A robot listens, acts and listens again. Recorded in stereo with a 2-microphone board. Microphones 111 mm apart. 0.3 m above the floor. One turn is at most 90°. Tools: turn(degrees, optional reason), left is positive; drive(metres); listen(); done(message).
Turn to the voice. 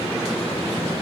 listen()
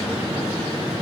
listen()
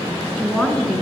turn(degrees=30)
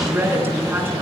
turn(degrees=-20, reason="So it is at 20° right.")
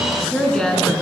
done("Found it: a woman speaking, straight ahead.")